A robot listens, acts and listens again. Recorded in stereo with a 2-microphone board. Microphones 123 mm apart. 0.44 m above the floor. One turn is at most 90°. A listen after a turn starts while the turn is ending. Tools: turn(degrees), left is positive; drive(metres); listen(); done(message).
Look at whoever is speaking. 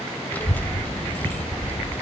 turn(degrees=30)
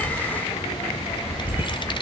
turn(degrees=90)
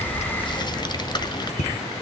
turn(degrees=40)
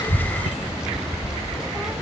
done("Found it: a child speaking, straight ahead.")